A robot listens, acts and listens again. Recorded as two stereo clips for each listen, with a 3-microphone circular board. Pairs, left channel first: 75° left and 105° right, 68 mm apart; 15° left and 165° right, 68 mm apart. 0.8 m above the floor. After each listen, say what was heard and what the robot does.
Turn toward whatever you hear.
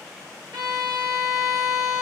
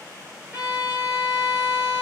The violin: 100° right. Turn 100° right.
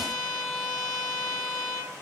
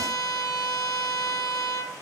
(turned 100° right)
Found it: a violin, straight ahead.